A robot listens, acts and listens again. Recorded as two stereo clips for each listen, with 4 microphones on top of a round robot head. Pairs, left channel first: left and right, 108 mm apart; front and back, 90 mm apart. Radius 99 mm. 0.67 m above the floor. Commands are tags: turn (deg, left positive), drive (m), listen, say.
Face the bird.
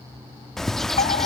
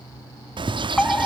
<turn deg="175"/>
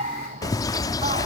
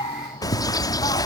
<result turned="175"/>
<turn deg="40"/>
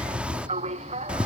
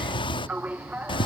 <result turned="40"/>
<turn deg="-10"/>
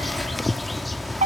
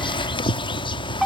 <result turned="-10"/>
<say>Found it: a bird, straight ahead.</say>